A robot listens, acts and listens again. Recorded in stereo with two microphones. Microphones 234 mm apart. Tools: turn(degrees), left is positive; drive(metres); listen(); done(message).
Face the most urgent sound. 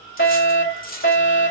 turn(degrees=55)
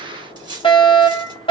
turn(degrees=25)
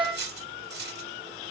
done("Found it: a fire alarm, straight ahead.")